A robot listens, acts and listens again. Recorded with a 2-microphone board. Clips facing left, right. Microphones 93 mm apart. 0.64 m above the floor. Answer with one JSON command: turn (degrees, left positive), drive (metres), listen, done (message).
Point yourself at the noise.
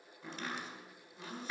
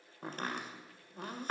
{"turn": -50}
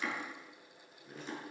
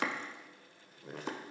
{"turn": -80}
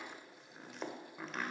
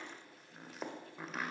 {"done": "Facing the chopping, 1 to 2 m away."}